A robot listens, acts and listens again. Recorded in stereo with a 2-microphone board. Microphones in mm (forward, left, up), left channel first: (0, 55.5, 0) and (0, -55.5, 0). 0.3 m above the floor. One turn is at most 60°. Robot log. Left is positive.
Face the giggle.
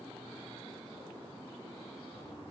cmd idle
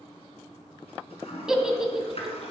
cmd yaw -30
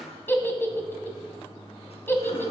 note: So it is at 20° left.
cmd yaw +20
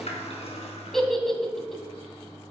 end: Facing the giggle.